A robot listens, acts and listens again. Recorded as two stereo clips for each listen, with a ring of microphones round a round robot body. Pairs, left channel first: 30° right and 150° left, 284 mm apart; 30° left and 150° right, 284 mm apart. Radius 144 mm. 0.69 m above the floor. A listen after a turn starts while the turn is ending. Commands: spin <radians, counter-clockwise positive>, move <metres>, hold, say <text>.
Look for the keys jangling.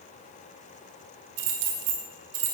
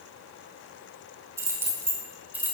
spin 2.18
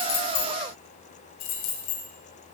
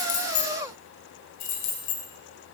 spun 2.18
say Found it: keys jangling, straight ahead, 2 to 4 m away.